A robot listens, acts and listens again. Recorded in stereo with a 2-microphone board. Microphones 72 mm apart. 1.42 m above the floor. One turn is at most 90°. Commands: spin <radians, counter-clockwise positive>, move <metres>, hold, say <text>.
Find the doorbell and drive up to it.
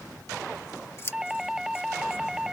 spin -0.52
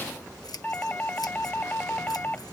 spin 0.44
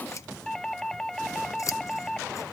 move 1.0
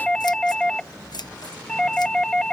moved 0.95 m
spin 0.17
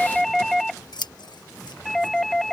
move 1.0
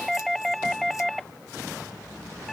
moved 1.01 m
move 1.0
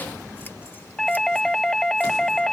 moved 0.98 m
spin 0.17
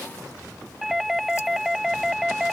move 1.0
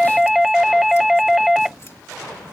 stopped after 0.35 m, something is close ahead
say Arrived at the doorbell, straight ahead.